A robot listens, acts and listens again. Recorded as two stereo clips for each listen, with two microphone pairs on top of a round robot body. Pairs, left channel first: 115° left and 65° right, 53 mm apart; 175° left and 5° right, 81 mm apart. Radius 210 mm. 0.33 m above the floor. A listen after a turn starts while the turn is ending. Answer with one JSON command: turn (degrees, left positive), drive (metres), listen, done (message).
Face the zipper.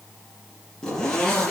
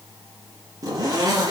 {"turn": 35}
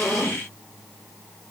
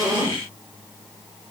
{"listen": true}
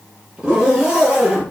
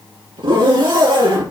{"done": "Found it: a zipper, straight ahead, over 4 m away."}